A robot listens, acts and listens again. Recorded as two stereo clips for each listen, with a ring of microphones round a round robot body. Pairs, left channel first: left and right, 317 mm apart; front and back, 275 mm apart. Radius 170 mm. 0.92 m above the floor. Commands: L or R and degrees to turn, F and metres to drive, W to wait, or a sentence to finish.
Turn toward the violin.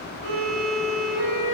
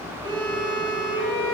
R115
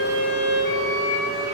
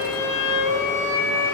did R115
Facing the violin.